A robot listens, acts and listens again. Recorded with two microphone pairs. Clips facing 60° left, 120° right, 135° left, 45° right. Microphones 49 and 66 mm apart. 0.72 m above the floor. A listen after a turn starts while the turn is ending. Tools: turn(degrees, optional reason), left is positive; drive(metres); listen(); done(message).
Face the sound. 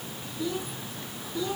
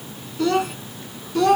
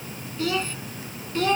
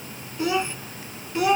turn(degrees=-120, reason="The child speaking: 120° right.")
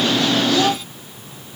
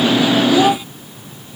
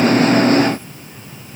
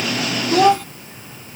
turn(degrees=-50, reason="The child speaking is now 50° right.")
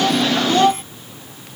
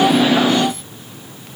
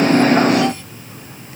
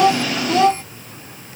turn(degrees=10, reason="The child speaking is now 10° left.")
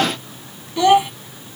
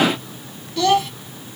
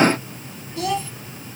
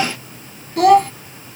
turn(degrees=-15, reason="The child speaking is now 15° right.")
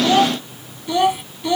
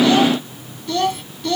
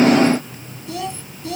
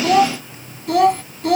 turn(degrees=-15, reason="The child speaking is now 15° right.")
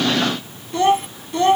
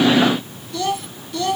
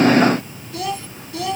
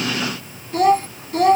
done("Facing the child speaking.")